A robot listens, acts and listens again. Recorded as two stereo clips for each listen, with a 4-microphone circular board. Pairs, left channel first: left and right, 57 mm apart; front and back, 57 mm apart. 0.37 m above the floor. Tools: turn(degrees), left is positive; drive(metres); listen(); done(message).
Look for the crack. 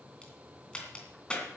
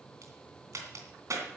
turn(degrees=165)
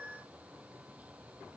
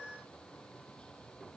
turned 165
done("I heard a crack from this way, but can't make it out now.")